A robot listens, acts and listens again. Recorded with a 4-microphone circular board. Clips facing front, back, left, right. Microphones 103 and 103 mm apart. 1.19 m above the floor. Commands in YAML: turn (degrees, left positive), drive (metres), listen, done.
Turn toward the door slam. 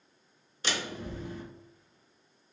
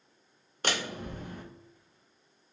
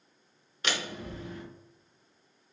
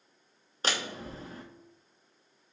turn: -145
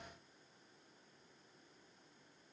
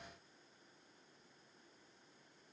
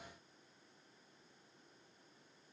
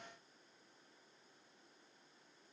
done: "I heard a door slam from this way, but can't make it out now."